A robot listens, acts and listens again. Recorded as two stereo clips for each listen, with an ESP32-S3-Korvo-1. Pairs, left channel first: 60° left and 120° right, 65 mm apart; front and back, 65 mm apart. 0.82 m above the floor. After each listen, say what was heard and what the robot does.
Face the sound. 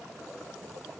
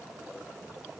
Keep listening.
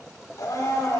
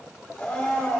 The blender: 75° left. Turn 75° left.
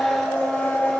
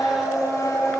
The blender is now 10° right. Turn 10° right.
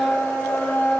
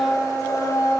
Found it: a blender, straight ahead.